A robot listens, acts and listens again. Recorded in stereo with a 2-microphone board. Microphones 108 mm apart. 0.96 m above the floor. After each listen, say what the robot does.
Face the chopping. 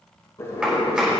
Turn 30° right.
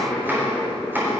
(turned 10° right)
Turn 160° right.
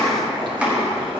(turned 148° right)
Turn 10° right.
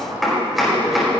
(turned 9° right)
Facing the chopping, over 4 m away.